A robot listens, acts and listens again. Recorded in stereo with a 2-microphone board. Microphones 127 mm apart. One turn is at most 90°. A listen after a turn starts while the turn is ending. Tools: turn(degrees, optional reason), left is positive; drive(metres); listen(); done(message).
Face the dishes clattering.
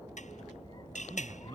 turn(degrees=70, reason="The dishes clattering: about 70° left or 110° left.")
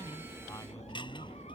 listen()
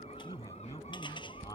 listen()
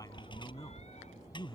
done("I heard dishes clattering, but can't make it out now. It was about straight ahead or 40° left.")